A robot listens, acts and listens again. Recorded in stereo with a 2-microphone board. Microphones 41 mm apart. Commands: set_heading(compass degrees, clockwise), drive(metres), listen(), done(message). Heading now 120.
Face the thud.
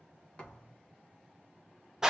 set_heading(100)
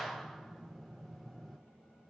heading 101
listen()
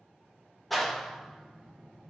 done("I heard a thud, but can't make it out now. It was about straight ahead or 140° left.")